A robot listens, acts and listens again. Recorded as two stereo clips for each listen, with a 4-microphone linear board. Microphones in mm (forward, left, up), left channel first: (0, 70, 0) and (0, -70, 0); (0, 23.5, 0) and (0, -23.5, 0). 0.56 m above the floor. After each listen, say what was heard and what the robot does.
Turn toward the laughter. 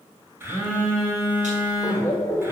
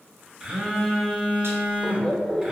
The laughter: about 20° left or 160° left. Turn 20° left.
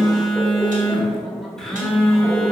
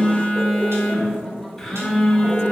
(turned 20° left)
Found it: laughter, straight ahead, 1 to 2 m away.